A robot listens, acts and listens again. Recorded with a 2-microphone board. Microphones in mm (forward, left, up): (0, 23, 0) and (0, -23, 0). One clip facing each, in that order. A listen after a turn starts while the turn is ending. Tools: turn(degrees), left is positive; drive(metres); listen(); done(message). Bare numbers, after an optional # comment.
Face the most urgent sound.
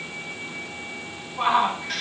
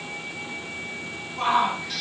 turn(30)
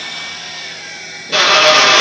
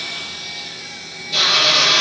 listen()
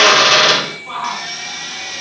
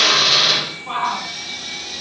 # So it is at 15° right.
turn(-15)
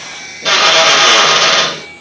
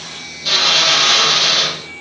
listen()
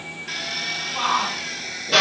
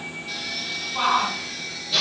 done("Found it: a shout, straight ahead.")